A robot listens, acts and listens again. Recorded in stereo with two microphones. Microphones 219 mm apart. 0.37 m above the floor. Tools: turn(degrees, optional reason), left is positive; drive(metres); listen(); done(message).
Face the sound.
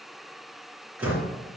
turn(degrees=-30)
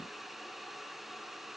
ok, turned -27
listen()
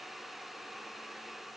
done("I heard a door slam, but can't make it out now. It was about 20° left or 145° right.")